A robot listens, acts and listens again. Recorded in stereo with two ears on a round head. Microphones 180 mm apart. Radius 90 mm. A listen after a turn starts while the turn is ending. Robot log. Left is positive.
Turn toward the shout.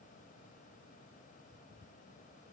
cmd idle
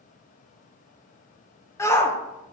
cmd yaw +30
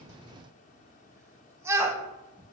note: So it is at 15° right.
cmd yaw -15
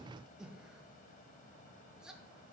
cmd idle
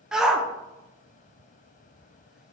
end: Found it: a shout, straight ahead.